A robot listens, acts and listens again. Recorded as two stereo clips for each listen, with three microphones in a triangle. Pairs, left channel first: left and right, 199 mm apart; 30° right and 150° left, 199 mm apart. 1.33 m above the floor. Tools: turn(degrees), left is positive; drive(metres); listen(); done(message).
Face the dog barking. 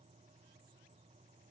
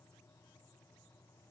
listen()
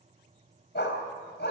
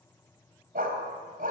turn(degrees=110)
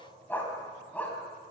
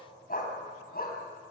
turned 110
done("Found it: a dog barking, straight ahead.")